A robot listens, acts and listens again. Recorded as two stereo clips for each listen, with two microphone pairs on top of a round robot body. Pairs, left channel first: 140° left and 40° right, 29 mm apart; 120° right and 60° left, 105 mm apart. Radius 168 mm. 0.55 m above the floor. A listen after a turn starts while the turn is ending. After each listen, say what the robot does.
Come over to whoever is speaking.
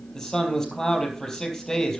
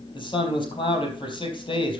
Turn 155° right.
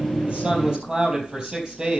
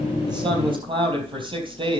Turn 20° left.
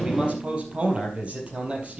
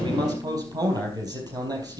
Drive 1.0 m forward.
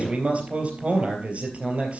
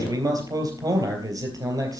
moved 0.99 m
Drive 1.0 m forward.
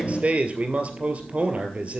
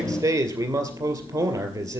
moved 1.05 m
Drive 1.0 m forward.
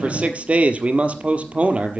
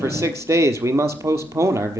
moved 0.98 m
Turn 10° right.
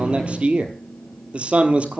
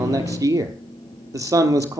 Drive 1.0 m forward.
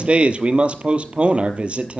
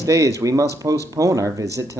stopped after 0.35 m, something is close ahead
Turn 10° right.
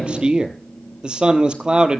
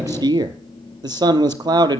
I am next to the man speaking.